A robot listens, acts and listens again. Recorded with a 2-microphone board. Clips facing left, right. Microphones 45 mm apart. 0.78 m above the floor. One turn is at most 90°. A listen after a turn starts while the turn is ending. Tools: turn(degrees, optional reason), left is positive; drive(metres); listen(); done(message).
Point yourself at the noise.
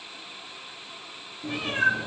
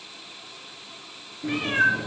turn(degrees=-45, reason="The cat meowing: about 45° right or 135° right.")
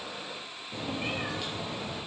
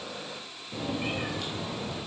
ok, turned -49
done("Facing the cat meowing.")